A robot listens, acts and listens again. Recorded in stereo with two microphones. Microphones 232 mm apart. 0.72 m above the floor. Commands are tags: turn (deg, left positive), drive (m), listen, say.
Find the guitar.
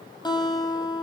<turn deg="20"/>
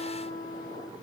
<turn deg="140"/>
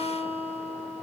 <turn deg="25"/>
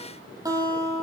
<turn deg="-15"/>
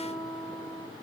<say>Facing the guitar.</say>